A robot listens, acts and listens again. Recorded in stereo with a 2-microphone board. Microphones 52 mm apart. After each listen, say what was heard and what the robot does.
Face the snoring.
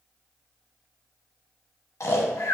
The snoring: about 70° left or 110° left. Turn 70° left.
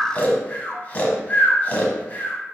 So it is at 30° left. Turn 30° left.
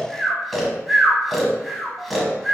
Facing the snoring, under 1 m away.